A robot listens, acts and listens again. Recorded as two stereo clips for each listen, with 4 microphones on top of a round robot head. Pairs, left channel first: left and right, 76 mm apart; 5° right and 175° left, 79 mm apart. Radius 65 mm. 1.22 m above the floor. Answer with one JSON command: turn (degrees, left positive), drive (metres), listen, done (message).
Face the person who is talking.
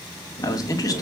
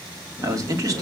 {"turn": 130}
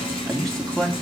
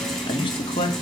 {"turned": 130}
{"done": "Found it: a man speaking, straight ahead, 2 to 4 m away."}